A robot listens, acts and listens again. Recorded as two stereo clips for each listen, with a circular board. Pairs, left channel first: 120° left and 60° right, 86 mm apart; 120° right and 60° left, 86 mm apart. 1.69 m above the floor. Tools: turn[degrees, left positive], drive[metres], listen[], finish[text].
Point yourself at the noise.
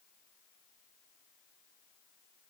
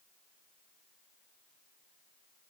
Action: listen[]
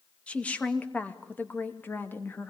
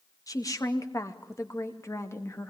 Thought: The woman speaking: 175° right.
Action: turn[-175]
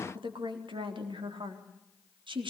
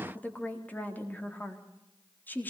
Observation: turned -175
Thought: The woman speaking is now 50° right.
Action: turn[-50]
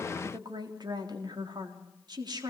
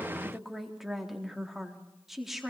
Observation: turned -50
Thought: The woman speaking is now 25° right.
Action: turn[-25]
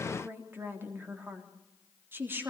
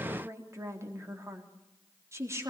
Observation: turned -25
Action: finish[Facing the woman speaking, 2 to 4 m away.]